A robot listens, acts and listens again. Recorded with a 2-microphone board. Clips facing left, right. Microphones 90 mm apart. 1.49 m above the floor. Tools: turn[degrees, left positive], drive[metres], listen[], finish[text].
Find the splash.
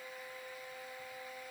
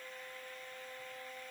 Action: listen[]
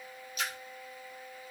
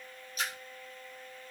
Thought: The splash: about 40° right or 140° right.
Action: turn[-40]
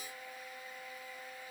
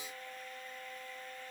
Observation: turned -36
Action: listen[]
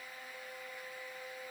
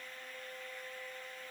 Action: finish[I heard a splash, but can't make it out now. It was about straight ahead or 105° right.]